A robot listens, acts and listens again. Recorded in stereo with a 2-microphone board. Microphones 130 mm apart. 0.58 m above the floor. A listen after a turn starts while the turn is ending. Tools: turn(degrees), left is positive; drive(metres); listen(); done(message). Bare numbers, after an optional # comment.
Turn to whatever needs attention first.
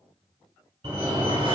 # The fire alarm: about 35° right or 145° right.
turn(-35)
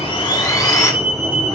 done("Found it: a fire alarm, straight ahead, 2 to 4 m away.")